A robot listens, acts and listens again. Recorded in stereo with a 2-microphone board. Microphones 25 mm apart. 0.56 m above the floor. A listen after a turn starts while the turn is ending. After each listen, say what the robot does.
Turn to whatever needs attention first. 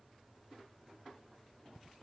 Keep listening.
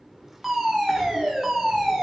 Turn 30° right.
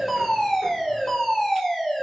Turn 25° left.
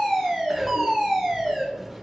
Turn 10° right.
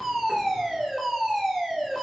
Found it: a fire alarm, straight ahead, 2 to 4 m away.